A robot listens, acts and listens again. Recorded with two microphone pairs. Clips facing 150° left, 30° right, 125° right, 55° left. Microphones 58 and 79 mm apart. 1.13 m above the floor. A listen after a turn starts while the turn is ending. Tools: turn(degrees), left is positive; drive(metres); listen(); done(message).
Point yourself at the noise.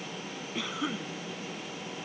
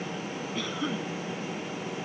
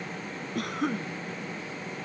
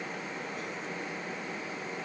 turn(degrees=-130)
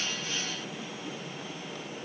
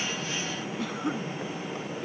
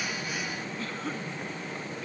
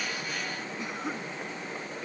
turn(degrees=-20)
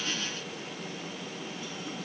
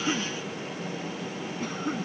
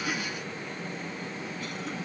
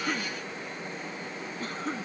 done("Facing the cough.")